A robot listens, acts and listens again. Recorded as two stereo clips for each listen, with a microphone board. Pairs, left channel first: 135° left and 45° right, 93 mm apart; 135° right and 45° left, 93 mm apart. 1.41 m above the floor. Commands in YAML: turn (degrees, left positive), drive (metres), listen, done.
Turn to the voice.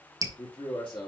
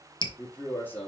turn: 155
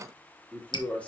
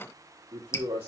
turn: 60
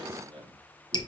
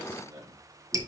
turn: -10
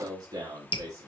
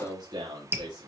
done: "Facing the man speaking, 2 to 4 m away."